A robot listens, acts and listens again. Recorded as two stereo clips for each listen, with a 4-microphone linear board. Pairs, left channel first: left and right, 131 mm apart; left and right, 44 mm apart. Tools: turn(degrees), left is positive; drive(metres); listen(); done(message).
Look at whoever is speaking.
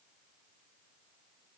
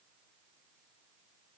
listen()
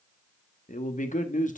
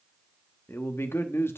turn(degrees=90)
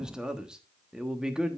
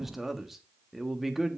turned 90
done("Found it: a man speaking, straight ahead.")